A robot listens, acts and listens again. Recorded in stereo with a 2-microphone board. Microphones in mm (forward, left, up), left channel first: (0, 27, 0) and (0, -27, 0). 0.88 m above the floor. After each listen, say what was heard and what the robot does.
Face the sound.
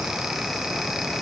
Keep listening.
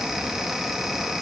Keep listening.
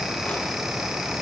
I can't make out anything to turn to.